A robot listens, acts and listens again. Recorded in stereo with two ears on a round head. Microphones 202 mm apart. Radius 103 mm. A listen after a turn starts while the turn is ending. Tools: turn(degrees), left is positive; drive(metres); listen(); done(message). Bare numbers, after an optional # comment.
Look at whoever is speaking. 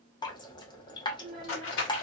# The child speaking: about 40° right or 140° right.
turn(-40)
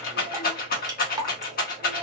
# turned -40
listen()
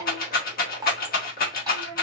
# So it is at 100° right.
turn(-100)
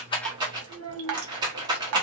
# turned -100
# The child speaking is now 25° right.
turn(-25)
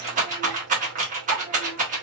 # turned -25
listen()
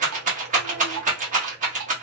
listen()
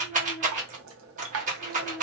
# The child speaking is now 10° right.
turn(-10)
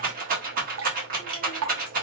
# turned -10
listen()
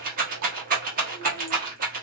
listen()
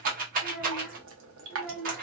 done("Found it: a child speaking, straight ahead.")